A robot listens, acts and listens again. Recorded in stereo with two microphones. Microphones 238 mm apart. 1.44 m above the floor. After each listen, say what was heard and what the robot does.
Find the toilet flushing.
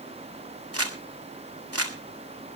Keep listening.
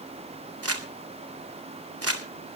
Keep listening.
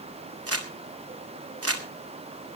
I can't make out a toilet flushing, only crumpling.